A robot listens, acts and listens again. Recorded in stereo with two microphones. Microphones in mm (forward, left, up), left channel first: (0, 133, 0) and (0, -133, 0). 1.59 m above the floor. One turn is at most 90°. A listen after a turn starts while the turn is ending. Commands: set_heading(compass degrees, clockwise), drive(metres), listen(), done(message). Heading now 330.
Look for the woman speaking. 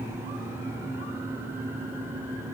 listen()
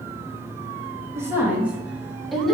set_heading(300)
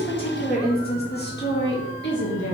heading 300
set_heading(210)
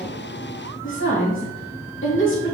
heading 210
set_heading(155)
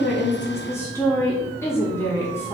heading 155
set_heading(145)
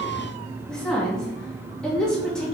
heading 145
done("Found it: a woman speaking, straight ahead, 2 to 4 m away.")